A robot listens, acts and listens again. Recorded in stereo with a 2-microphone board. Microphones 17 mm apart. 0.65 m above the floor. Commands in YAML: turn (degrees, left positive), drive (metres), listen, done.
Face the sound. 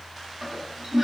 turn: -30
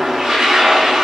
turn: -120
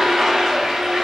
turn: -40
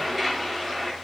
done: "Found it: a toilet flushing, straight ahead, under 1 m away."